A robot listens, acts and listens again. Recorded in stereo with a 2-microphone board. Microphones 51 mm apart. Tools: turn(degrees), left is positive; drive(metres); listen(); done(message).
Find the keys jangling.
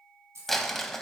turn(degrees=-65)
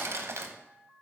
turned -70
listen()
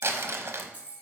turn(degrees=-30)
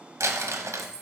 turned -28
turn(degrees=-20)
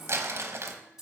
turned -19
turn(degrees=-10)
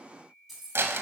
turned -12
done("Found it: keys jangling, straight ahead.")